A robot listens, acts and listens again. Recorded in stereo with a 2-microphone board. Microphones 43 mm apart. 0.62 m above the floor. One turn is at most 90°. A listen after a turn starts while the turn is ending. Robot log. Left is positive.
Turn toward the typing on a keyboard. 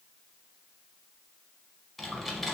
cmd yaw +30
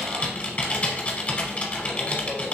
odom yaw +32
note: So it is at 140° left.
cmd yaw +90
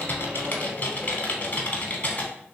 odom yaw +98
note: The typing on a keyboard is now 40° left.
cmd yaw +40
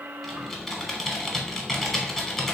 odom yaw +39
end: Found it: typing on a keyboard, straight ahead.